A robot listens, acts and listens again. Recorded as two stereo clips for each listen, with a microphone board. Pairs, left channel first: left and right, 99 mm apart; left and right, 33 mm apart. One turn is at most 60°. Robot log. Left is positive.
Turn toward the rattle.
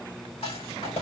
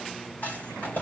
cmd yaw +60
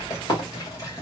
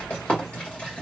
note: So it is at 40° left.
cmd yaw +40
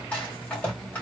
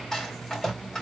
note: The rattle is now 15° left.
cmd yaw +15
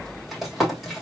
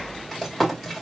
end: Facing the rattle.